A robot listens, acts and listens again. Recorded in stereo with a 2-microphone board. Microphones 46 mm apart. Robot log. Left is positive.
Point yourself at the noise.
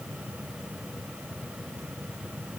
cmd idle
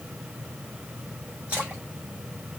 note: The splash: about 30° right or 150° right.
cmd yaw -30
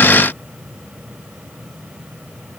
cmd idle
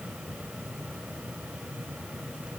end: I heard a splash, but can't make it out now. It was about straight ahead or 120° right.